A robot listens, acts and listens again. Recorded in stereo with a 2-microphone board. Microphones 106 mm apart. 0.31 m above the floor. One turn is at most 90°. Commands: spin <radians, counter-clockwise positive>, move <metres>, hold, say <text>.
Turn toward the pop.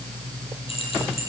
hold
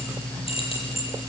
hold
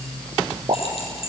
spin -0.79
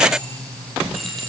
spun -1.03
hold
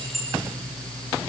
say I heard a pop, but can't make it out now. It was about 15° left or 75° right.